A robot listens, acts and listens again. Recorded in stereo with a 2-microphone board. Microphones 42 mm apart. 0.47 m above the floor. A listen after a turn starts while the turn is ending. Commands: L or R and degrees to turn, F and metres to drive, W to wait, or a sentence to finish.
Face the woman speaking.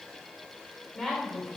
L30
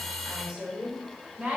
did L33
R30
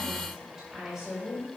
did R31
R15
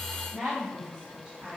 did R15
R10
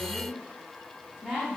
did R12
Found it: a woman speaking, straight ahead.